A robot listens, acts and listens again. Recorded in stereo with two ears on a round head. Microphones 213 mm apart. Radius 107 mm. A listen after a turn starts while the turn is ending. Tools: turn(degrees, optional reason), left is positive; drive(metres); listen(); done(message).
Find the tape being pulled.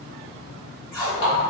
turn(degrees=30)
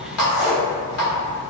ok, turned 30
turn(degrees=-20, reason="So it is at 20° right.")
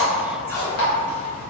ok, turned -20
done("Facing the tape being pulled, 1 to 2 m away.")